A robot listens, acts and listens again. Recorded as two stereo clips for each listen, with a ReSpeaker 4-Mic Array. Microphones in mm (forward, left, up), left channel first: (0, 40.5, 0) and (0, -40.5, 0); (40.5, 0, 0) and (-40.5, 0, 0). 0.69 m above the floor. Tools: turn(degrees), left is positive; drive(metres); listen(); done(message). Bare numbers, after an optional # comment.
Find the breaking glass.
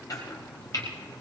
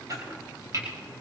listen()
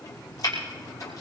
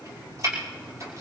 listen()
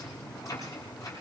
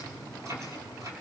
done("I can't make out breaking glass to turn to.")